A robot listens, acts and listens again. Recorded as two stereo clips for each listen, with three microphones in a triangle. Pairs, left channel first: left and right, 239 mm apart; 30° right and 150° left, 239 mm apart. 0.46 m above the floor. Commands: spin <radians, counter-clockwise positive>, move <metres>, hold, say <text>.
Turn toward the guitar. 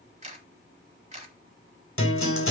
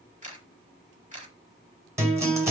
spin 1.31
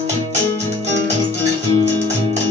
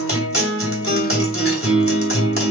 spin -0.52
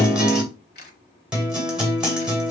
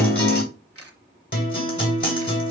say Found it: a guitar, straight ahead, 2 to 4 m away.